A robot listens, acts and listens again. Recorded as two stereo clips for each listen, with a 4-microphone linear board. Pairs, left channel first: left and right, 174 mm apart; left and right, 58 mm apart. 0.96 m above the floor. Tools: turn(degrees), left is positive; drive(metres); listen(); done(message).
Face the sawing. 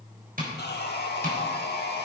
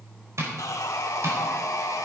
turn(degrees=70)
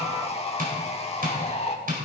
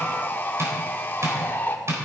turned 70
turn(degrees=35)
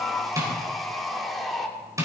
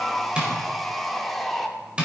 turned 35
done("Facing the sawing, 1 to 2 m away.")